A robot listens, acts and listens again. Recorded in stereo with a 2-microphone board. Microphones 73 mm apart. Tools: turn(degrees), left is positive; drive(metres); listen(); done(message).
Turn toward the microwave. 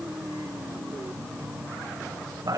listen()
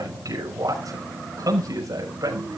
listen()
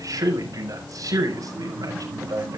done("I can't make out a microwave, only a man speaking.")